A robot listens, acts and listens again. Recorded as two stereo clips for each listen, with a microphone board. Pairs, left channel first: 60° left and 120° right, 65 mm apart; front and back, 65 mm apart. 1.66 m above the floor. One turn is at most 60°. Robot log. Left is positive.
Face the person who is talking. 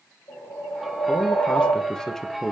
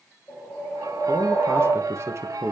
note: The man speaking: 150° left.
cmd yaw +60
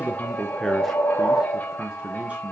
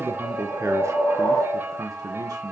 note: The man speaking is now 175° left.
cmd yaw +60
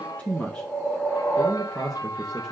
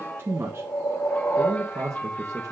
note: The man speaking is now 140° left.
cmd yaw +60
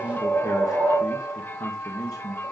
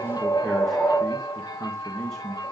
note: The man speaking is now 75° left.
cmd yaw +60
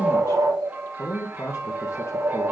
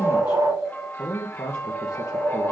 note: The man speaking is now 15° left.
cmd yaw +15
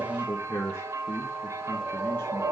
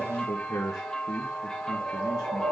end: Facing the man speaking, 1 to 2 m away.